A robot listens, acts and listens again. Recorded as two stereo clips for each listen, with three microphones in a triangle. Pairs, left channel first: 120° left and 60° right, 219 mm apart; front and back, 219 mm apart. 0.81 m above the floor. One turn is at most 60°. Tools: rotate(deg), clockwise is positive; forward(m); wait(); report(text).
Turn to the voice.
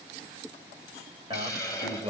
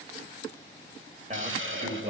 rotate(60)
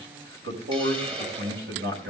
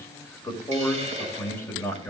rotate(60)
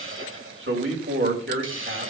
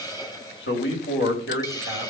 rotate(30)
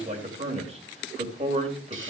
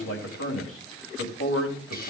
report("Facing the man speaking, 2 to 4 m away.")